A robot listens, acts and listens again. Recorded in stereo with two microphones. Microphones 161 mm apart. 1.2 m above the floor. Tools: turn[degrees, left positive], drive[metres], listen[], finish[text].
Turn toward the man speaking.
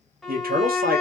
Thought: The man speaking: about 70° right or 110° right.
Action: turn[-70]
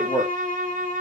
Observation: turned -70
Thought: So it is at 10° right.
Action: turn[-10]
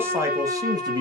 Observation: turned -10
Thought: The man speaking is now 30° right.
Action: turn[-30]
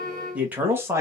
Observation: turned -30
Thought: The man speaking is now 15° right.
Action: turn[-15]
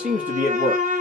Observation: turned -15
Thought: The man speaking is now 15° right.
Action: turn[-15]
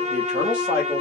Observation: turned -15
Thought: The man speaking is now 10° right.
Action: turn[-10]
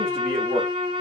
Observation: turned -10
Action: finish[Facing the man speaking, 1 to 2 m away.]